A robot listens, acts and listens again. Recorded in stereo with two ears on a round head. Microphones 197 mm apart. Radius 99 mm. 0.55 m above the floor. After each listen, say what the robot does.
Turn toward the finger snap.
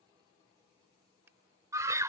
Turn 30° right.
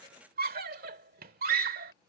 Keep listening.
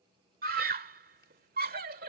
Keep listening.
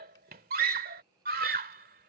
I heard a finger snap, but can't make it out now. It was about 20° left or 140° right.